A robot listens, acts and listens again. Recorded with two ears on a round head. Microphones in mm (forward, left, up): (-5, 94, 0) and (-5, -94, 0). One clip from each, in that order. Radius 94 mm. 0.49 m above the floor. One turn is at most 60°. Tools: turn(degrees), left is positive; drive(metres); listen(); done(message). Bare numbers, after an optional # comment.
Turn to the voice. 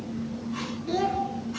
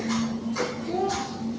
# The child speaking: about 60° left or 120° left.
turn(60)
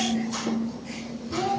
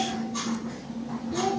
done("Facing the child speaking, over 4 m away.")